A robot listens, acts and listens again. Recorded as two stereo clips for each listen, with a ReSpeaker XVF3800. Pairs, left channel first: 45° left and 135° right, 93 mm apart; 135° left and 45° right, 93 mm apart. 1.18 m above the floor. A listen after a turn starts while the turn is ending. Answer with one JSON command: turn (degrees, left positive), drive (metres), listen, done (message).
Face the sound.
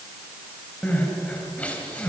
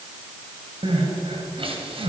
{"turn": -30}
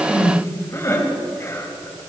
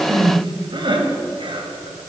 {"turn": -15}
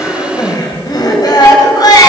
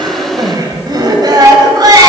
{"done": "Found it: crying, straight ahead."}